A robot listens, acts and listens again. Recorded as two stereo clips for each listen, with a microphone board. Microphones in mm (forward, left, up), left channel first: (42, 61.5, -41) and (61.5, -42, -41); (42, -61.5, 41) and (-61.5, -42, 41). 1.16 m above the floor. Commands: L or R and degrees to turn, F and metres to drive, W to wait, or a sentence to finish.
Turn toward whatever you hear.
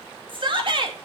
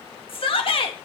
R40
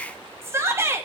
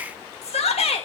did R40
R15
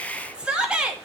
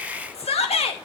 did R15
Facing the shout.